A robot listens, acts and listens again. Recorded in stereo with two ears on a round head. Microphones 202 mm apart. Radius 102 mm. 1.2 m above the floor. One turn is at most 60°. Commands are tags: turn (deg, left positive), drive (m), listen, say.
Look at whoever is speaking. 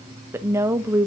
<turn deg="-30"/>
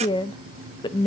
<turn deg="20"/>
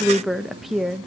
<say>Facing the woman speaking, under 1 m away.</say>